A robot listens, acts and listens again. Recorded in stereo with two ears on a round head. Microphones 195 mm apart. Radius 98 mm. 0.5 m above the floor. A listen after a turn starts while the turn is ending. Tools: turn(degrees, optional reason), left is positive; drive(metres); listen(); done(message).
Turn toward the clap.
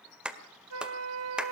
turn(degrees=-30)
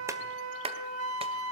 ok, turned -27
turn(degrees=-150, reason="So it is at 150° right.")
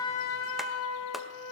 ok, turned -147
listen()
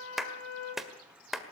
done("Found it: a clap, straight ahead.")